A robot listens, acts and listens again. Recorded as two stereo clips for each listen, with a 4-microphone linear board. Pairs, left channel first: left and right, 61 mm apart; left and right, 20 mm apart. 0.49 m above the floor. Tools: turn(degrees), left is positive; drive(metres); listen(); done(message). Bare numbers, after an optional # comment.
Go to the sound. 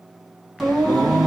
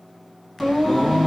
turn(-30)
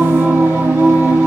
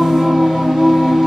# So it is at 145° right.
turn(-145)
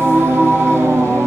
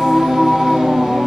# The singing is now 50° right.
turn(-50)
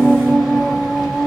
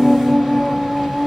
drive(1.0)
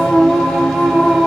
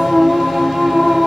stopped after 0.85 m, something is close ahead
# The singing is now 15° left.
turn(15)
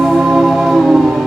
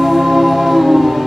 done("I am next to the singing.")